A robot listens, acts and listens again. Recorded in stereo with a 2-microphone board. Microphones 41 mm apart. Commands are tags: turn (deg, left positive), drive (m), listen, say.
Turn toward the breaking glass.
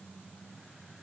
<listen/>
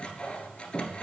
<listen/>
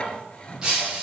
<turn deg="-20"/>
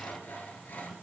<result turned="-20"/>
<listen/>
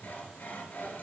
<say>I heard breaking glass, but can't make it out now. It was about straight ahead or 140° right.</say>